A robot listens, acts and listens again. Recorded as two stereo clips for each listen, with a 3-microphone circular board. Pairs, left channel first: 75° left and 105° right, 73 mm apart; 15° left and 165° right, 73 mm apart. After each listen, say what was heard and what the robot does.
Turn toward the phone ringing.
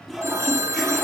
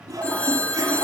The phone ringing: 55° right. Turn 55° right.
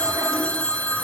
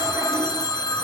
Facing the phone ringing, under 1 m away.